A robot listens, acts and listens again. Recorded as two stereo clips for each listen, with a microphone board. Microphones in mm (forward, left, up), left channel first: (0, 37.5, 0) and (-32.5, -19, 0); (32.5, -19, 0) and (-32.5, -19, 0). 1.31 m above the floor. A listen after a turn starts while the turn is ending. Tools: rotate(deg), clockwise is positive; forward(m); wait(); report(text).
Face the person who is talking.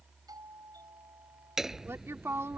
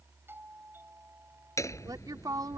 rotate(170)
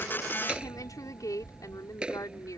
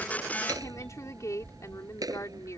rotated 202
rotate(-35)
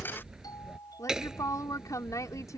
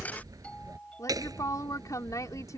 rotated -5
rotate(-30)
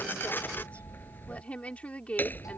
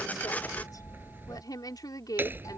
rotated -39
rotate(10)
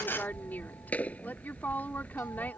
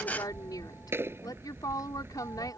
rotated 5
report("Found it: a woman speaking, straight ahead.")